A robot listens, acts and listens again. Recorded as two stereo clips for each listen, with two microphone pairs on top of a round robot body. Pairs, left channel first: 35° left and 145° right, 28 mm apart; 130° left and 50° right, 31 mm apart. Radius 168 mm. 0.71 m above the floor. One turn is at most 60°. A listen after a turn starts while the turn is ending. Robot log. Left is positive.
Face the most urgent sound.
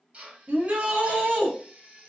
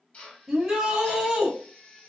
note: The shout: 120° right.
cmd yaw -60
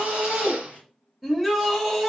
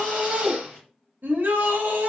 note: The shout is now 60° right.
cmd yaw -60
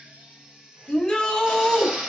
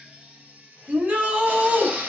note: The shout is now 20° right.
cmd yaw -20
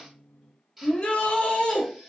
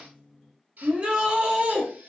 end: Found it: a shout, straight ahead, under 1 m away.